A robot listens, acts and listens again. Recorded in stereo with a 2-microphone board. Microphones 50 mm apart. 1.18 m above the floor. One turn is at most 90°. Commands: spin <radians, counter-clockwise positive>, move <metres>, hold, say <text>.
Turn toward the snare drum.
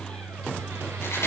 hold
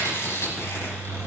hold
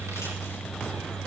say I can't make out a snare drum, only chewing.